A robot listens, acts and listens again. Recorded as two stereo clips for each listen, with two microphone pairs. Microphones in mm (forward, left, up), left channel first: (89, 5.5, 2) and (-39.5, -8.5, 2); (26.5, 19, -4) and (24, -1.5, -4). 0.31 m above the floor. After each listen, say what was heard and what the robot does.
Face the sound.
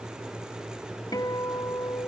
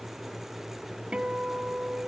The guitar: 55° right. Turn 55° right.
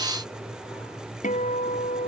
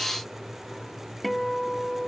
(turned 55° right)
Facing the guitar.